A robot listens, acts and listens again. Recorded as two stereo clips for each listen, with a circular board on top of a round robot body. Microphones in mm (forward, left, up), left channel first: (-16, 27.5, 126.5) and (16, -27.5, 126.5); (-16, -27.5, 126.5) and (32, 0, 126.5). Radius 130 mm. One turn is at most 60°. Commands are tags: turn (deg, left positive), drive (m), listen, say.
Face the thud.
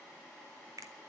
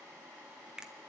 <listen/>
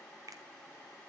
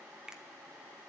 <listen/>
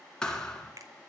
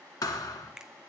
<turn deg="-60"/>
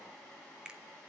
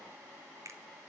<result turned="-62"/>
<turn deg="-60"/>
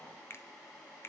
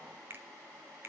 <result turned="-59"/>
<turn deg="-40"/>
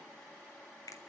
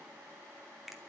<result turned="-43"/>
<say>I heard a thud from this way, but can't make it out now.</say>